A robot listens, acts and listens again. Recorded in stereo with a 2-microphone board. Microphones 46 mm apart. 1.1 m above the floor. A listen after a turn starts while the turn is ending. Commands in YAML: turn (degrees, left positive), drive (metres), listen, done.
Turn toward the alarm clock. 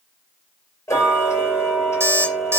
turn: -65
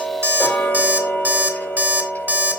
turn: -45
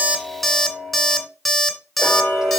done: "Facing the alarm clock."